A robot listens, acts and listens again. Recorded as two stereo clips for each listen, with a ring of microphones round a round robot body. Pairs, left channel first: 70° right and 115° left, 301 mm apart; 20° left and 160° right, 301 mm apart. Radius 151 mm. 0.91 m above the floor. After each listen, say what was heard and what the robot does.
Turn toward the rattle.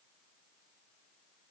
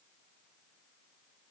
Keep listening.
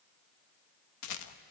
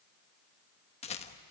The rattle: 45° right. Turn 45° right.
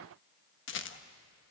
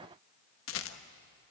The rattle is now 20° right. Turn 20° right.
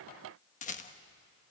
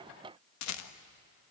Facing the rattle.